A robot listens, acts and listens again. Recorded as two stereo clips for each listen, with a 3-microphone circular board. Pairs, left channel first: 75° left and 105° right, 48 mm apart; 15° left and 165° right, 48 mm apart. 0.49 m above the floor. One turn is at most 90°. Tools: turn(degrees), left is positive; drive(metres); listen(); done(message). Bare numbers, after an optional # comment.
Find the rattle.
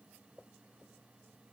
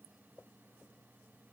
listen()
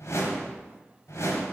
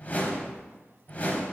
listen()
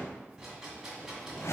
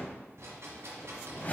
# The rattle: 175° left.
turn(90)
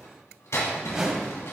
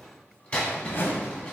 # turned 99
# The rattle is now 75° left.
turn(75)
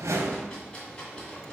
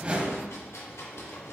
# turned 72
done("Found it: a rattle, straight ahead, 1 to 2 m away.")